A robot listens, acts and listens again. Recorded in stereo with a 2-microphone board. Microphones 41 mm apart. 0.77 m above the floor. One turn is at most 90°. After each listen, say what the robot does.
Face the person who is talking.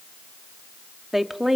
Turn 30° right.
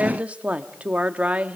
Turn 90° right.
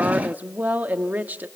Turn 50° right.
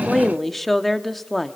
Facing the woman speaking, 1 to 2 m away.